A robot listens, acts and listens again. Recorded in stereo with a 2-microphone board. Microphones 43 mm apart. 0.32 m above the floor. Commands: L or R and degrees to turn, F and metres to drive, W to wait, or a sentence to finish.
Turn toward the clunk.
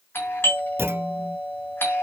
R90
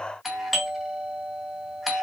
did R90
Facing where the clunk came from. I can't hear it now.